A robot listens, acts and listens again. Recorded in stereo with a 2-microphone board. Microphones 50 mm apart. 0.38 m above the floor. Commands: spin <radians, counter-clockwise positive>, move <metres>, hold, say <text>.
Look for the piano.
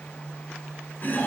hold
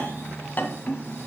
hold
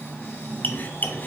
say I can't make out a piano to turn to.